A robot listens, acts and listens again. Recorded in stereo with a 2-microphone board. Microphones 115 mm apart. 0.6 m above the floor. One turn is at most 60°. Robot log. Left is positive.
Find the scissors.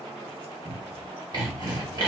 cmd idle
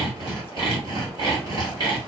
cmd idle
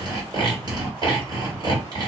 end: I can't make out scissors to turn to.